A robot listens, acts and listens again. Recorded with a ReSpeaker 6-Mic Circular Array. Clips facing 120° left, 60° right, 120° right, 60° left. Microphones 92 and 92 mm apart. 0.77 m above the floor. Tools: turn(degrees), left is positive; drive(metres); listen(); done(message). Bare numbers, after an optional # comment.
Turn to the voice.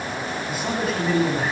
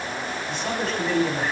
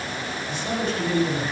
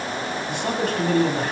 # The man speaking: 35° left.
turn(35)
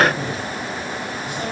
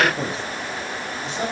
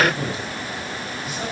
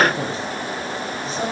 done("Facing the man speaking.")